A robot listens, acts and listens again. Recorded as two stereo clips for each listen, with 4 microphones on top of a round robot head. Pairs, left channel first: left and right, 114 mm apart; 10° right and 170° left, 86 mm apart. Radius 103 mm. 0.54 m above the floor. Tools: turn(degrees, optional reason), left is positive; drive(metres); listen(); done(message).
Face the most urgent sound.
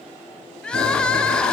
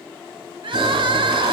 turn(degrees=170, reason="The crying: 170° left.")
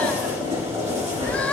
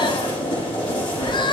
listen()
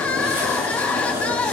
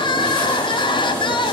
turn(degrees=10, reason="The crying is now 10° left.")
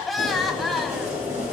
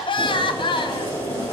done("Facing the crying, under 1 m away.")